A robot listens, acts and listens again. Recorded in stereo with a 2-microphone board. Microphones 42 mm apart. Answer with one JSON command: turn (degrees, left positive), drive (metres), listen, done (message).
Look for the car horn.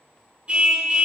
{"turn": -30}
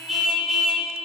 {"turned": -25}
{"done": "Facing the car horn, 2 to 4 m away."}